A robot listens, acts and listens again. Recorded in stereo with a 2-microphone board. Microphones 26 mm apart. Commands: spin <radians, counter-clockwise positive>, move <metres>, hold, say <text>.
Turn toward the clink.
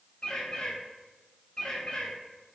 hold
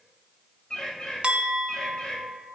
spin -0.79
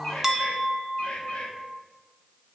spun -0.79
spin -0.26
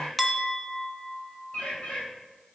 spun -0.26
say Found it: a clink, straight ahead, under 1 m away.